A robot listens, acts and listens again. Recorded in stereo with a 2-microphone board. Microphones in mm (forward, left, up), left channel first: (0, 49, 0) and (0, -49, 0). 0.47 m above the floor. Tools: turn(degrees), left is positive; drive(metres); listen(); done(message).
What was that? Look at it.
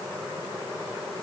listen()
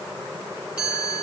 turn(degrees=-30)
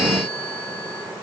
listen()
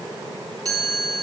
turn(degrees=-140)
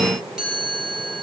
done("Facing the chime, over 4 m away.")